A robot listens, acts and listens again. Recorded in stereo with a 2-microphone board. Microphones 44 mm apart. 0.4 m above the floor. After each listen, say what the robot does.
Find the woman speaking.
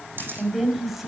Turn 30° right.
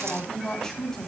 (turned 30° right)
Turn 10° left.
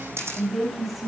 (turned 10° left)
Facing the woman speaking, 2 to 4 m away.